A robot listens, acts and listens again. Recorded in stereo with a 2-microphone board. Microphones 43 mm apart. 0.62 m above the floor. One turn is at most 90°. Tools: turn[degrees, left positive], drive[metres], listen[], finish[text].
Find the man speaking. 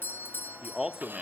Thought: The man speaking: about 20° right or 160° right.
Action: turn[-20]
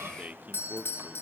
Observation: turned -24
Thought: So it is at 135° right.
Action: turn[-90]
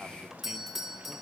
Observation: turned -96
Thought: Nothing new. It was at 40° right.
Action: turn[-40]
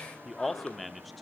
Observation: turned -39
Action: finish[Found it: a man speaking, straight ahead.]